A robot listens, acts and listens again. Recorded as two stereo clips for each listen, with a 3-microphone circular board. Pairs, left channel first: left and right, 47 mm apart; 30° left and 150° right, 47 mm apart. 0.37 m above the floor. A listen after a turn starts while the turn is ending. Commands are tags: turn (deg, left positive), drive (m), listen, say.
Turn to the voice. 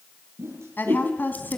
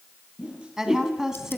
<turn deg="135"/>
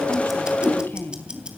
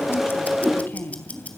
<turn deg="60"/>
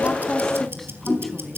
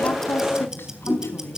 <listen/>
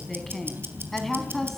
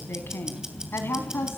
<say>Found it: a woman speaking, straight ahead, 2 to 4 m away.</say>